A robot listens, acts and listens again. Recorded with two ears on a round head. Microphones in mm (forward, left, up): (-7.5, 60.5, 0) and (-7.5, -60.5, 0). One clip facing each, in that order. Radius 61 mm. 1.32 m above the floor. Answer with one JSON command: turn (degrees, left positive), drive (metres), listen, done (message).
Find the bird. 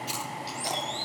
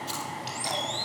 {"turn": -25}
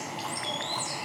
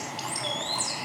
{"turn": -130}
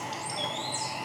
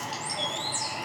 {"done": "Found it: a bird, straight ahead, over 4 m away."}